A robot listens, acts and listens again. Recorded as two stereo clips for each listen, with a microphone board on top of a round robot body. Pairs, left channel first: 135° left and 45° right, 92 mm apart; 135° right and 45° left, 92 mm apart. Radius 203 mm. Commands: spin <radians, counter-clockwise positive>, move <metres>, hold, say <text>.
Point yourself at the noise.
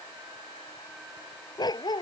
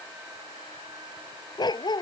spin 3.14
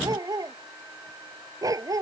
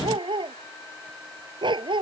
spin 0.17
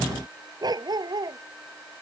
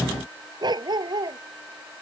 say Found it: a dog barking, straight ahead.